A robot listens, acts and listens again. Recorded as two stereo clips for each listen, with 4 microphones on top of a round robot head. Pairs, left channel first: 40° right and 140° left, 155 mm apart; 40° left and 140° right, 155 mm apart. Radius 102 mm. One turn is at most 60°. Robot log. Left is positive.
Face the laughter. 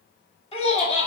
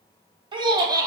note: The laughter: 80° right.
cmd yaw -60
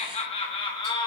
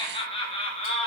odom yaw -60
note: The laughter is now 15° left.
cmd yaw +15
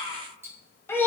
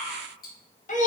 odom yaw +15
note: The laughter is now 35° left.
cmd yaw +35
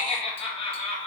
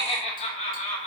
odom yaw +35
note: The laughter is now 10° left.
cmd yaw +10
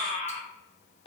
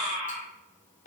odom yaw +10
note: The laughter is now 10° left.
cmd yaw +10
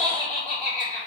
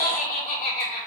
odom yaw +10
end: Found it: laughter, straight ahead, 2 to 4 m away.